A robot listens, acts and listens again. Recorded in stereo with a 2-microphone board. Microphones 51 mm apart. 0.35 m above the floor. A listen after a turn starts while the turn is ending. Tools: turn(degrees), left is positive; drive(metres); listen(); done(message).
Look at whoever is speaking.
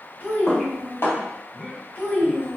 turn(degrees=40)
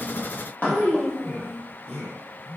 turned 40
turn(degrees=95)
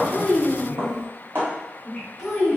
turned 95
turn(degrees=-10)
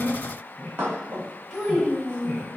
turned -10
done("Facing the child speaking, 1 to 2 m away.")